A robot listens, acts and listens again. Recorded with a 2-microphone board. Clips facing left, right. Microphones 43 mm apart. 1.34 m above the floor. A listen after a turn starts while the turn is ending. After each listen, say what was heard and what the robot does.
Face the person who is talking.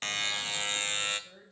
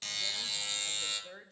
The woman speaking: about 60° right or 120° right. Turn 60° right.
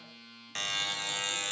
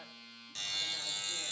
Keep listening.
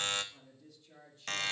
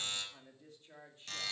So it is at 35° right. Turn 35° right.
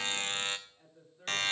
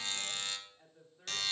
The woman speaking is now 10° right. Turn 10° right.
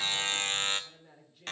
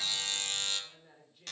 Facing the woman speaking, 2 to 4 m away.